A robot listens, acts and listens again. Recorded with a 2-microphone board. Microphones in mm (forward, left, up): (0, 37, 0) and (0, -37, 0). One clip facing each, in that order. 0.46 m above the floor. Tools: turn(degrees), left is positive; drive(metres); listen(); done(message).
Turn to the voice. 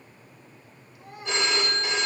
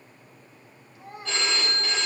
turn(degrees=-35)
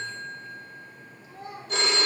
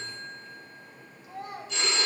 turn(degrees=-105)
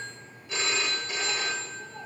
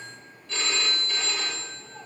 listen()
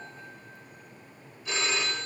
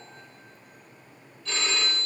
listen()
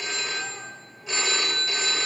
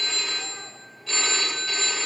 done("Facing where the child speaking came from. I can't hear it now.")